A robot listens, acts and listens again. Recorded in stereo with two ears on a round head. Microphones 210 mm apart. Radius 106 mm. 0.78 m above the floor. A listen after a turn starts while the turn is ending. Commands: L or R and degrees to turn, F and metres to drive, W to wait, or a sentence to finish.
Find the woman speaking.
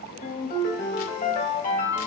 W
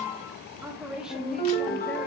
R30
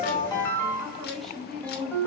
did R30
L30
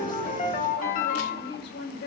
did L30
L130
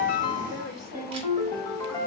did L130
W
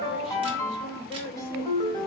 Found it: a woman speaking, straight ahead.